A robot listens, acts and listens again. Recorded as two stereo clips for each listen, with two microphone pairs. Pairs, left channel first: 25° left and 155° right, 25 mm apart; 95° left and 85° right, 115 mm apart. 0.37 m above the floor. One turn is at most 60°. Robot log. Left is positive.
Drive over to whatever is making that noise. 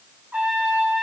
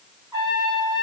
note: The trumpet: 140° right.
cmd yaw -60
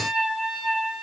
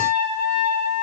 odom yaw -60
note: The trumpet is now 85° right.
cmd yaw -60
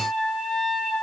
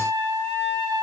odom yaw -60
note: The trumpet is now 30° right.
cmd yaw -30
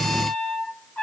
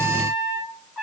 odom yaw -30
note: The trumpet is now 10° left.
cmd yaw +10
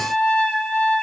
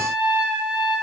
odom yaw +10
cmd fwd 1.0
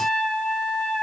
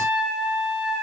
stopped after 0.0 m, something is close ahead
end: Blocked. The trumpet is further on, straight ahead.